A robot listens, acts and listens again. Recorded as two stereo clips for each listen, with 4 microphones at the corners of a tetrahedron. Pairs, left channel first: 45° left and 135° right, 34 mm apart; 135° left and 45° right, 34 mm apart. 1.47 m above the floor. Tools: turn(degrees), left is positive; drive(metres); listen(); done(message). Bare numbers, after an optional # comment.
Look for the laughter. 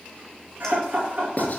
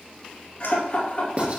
# The laughter: 175° right.
turn(-175)
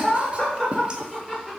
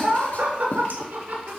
# The laughter is now 30° right.
turn(-30)
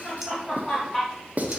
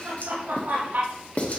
# The laughter is now 20° right.
turn(-20)
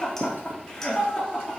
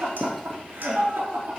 # The laughter is now 10° right.
turn(-10)
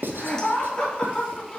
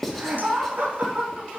done("Found it: laughter, straight ahead.")